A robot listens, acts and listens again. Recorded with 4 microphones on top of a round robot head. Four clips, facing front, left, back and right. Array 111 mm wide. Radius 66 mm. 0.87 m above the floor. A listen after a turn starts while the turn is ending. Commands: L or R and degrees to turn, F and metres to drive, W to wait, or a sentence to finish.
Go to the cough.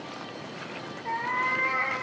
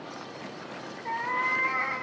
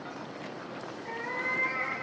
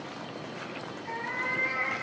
W
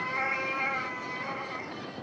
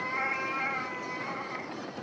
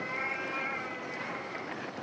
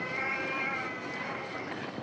W
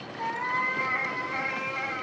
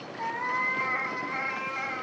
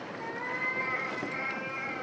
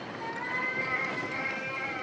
I can't make out a cough to turn to.